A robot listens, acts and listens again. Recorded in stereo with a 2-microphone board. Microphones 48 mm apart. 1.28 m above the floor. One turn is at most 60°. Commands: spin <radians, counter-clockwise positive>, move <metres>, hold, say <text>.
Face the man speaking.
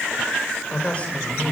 spin 0.52
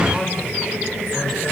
hold
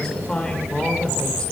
spin 0.35
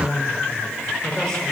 spin 0.17
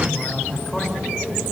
say Facing the man speaking.